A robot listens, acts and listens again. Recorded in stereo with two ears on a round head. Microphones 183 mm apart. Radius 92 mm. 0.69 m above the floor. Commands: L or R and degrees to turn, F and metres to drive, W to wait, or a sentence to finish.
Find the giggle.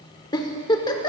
L20
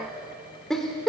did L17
Facing the giggle, 1 to 2 m away.